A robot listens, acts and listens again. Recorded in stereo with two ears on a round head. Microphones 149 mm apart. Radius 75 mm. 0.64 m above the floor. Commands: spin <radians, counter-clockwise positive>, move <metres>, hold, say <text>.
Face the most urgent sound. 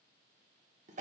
hold
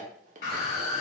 spin 0.96
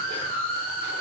spin 1.13
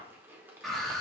say Facing the scream, 2 to 4 m away.